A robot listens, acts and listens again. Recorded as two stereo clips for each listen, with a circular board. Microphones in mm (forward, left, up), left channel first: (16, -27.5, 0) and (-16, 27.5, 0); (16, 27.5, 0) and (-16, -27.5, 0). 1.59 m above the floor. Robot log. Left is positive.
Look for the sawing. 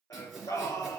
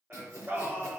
note: The sawing: 150° right.
cmd yaw -150
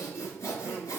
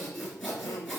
note: The sawing is now 25° right.
cmd yaw -25
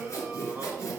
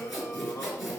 note: The sawing is now 30° right.
cmd yaw -30
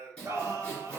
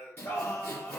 note: The sawing is now 10° left.
cmd yaw +10
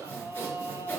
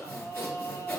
end: Found it: sawing, straight ahead.